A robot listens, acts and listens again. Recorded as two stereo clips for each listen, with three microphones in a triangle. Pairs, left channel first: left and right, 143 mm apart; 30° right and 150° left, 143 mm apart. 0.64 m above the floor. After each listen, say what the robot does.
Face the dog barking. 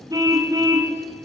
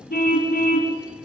Keep listening.
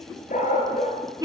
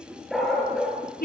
Turn 60° left.
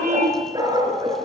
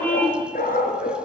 Turn 30° right.
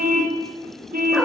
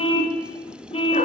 Keep listening.
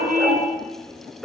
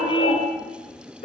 Facing the dog barking.